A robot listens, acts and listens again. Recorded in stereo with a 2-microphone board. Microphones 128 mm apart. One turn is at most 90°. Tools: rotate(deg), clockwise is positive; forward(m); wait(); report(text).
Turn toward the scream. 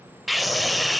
rotate(-30)
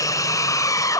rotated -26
rotate(-90)
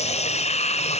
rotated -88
rotate(-65)
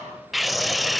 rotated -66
report("Found it: a scream, straight ahead.")